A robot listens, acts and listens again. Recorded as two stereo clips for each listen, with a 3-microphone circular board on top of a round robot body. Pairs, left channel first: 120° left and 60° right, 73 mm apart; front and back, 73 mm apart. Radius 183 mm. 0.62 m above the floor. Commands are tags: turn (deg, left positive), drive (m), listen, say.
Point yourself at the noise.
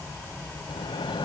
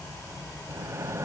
<turn deg="125"/>
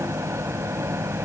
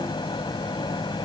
<say>Facing the microwave.</say>